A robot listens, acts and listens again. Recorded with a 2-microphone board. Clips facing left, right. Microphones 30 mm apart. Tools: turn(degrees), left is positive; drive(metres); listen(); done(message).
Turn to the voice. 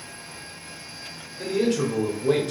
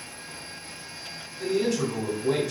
turn(degrees=55)
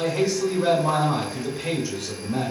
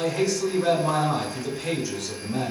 turn(degrees=20)
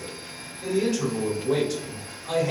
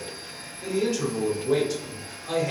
done("Found it: a man speaking, straight ahead, 1 to 2 m away.")